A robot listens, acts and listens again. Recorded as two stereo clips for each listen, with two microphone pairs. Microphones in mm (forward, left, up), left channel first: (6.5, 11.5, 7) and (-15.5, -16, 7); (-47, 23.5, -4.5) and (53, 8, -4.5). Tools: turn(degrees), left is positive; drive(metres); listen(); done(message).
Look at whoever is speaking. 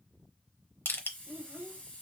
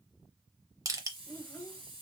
turn(degrees=-120)
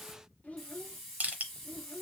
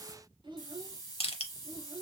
turn(degrees=15)
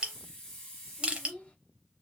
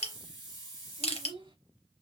done("Facing the child speaking, 1 to 2 m away.")